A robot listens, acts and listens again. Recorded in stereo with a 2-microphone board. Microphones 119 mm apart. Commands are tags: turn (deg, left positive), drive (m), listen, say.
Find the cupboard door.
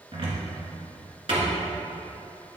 <turn deg="-50"/>
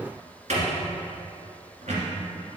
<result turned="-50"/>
<turn deg="-85"/>
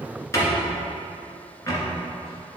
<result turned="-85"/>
<turn deg="25"/>
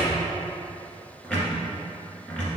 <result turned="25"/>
<turn deg="10"/>
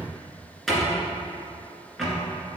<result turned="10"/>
<say>Facing the cupboard door, 1 to 2 m away.</say>